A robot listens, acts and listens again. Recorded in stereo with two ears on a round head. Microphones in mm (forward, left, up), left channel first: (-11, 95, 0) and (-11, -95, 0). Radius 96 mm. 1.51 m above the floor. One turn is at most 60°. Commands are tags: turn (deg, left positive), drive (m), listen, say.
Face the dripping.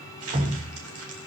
<turn deg="-30"/>
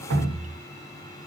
<turn deg="-60"/>
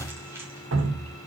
<turn deg="-60"/>
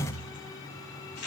<turn deg="30"/>
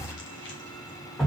<say>Facing the dripping, 1 to 2 m away.</say>